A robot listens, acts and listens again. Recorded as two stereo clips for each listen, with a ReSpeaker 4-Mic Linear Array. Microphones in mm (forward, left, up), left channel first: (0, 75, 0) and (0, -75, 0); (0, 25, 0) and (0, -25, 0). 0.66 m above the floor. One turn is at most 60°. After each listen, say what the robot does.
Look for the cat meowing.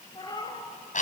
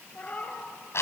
Turn 25° left.
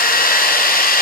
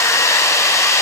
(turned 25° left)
Keep listening.
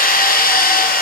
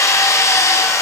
Keep listening.
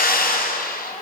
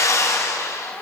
I heard a cat meowing, but can't make it out now. It was about straight ahead or 130° left.